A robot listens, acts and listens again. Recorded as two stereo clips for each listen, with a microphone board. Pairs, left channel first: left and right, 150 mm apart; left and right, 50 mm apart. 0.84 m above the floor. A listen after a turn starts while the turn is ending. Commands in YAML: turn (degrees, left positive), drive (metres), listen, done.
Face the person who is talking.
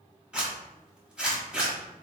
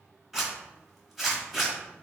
listen: true
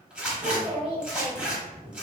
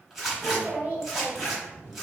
turn: -40
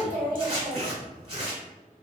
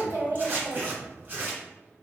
listen: true
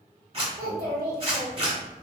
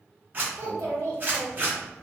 turn: -100
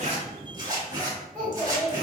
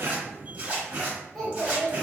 done: "Found it: a child speaking, straight ahead."